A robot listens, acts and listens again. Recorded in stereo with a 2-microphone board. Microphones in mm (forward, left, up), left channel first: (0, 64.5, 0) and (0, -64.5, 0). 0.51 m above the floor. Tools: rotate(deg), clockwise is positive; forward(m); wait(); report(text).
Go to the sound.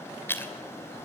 rotate(-15)
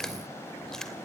forward(1.0)
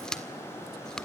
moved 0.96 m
forward(1.0)
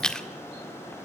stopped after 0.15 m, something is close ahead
rotate(-10)
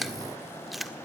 report("I am next to the chewing.")